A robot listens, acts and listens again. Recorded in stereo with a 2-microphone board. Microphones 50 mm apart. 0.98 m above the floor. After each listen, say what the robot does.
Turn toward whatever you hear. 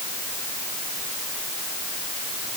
Keep listening.
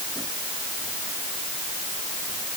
Keep listening.
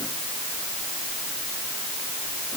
I can't make out anything.